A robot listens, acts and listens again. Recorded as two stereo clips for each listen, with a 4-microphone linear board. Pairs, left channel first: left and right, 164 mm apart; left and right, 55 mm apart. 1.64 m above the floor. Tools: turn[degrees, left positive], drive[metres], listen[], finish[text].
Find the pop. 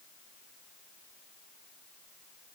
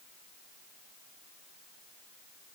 Action: listen[]
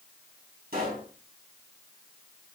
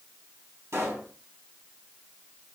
Thought: The pop: about 75° right or 105° right.
Action: turn[-75]
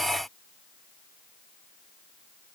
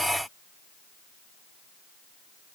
Action: listen[]
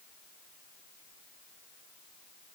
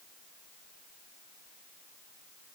Action: finish[I heard a pop, but can't make it out now. It was about straight ahead or 30° right.]